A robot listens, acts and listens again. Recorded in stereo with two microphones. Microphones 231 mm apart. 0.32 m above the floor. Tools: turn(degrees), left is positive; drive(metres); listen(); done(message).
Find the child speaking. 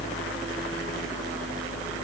listen()
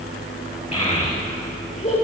turn(degrees=25)
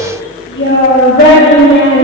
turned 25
turn(degrees=125)
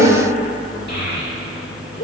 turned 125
turn(degrees=45)
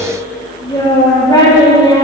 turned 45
turn(degrees=20)
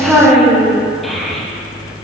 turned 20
done("Found it: a child speaking, straight ahead, over 4 m away.")